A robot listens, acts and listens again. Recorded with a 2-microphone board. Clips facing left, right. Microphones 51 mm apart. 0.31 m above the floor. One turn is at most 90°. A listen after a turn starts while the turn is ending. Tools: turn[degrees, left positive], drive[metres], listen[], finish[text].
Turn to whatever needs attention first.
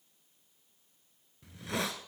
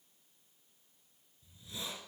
Action: listen[]
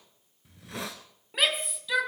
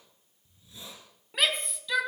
Action: turn[30]
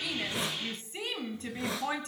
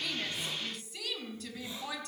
Thought: So it is at 145° left.
Action: turn[90]
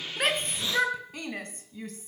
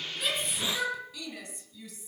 Thought: The shout is now 50° left.
Action: turn[50]
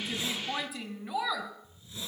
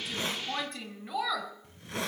Action: finish[Facing the shout.]